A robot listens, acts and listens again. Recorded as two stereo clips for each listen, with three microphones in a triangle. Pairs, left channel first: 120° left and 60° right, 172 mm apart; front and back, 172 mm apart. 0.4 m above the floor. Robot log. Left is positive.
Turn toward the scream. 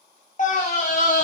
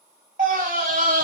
note: The scream: 155° left.
cmd yaw +155
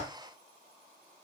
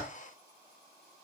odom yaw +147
cmd idle
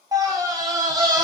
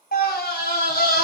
end: Found it: a scream, straight ahead.